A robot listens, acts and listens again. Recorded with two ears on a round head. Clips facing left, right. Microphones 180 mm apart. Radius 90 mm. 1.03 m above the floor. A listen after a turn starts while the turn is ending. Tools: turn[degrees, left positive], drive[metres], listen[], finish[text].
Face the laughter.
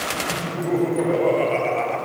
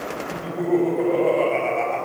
Action: turn[30]
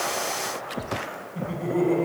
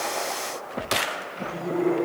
Thought: So it is at 140° left.
Action: turn[140]
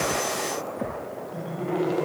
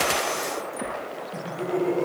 Thought: The laughter is now 30° right.
Action: turn[-30]
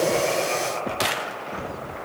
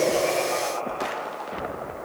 Thought: The laughter is now 30° left.
Action: turn[30]
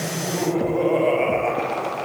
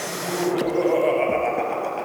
Action: finish[Found it: laughter, straight ahead.]